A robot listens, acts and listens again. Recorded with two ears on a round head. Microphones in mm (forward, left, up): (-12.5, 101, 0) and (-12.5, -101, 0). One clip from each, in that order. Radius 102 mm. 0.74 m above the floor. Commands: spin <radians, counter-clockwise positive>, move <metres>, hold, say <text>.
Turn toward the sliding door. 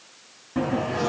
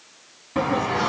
spin -1.13
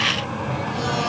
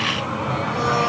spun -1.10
say Facing the sliding door.